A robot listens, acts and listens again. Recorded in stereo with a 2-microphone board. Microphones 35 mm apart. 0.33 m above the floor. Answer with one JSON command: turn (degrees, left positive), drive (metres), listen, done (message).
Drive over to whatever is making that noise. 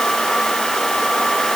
{"listen": true}
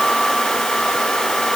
{"listen": true}
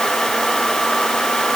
{"done": "I can't make out anything."}